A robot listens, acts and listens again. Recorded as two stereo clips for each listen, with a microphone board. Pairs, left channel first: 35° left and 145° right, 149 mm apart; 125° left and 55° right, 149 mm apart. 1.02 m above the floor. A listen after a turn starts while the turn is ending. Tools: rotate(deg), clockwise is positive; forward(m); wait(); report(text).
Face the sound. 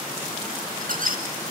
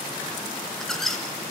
rotate(150)
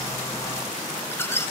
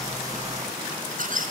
rotate(40)
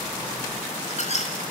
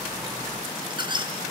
report("Found it: a squeak, straight ahead.")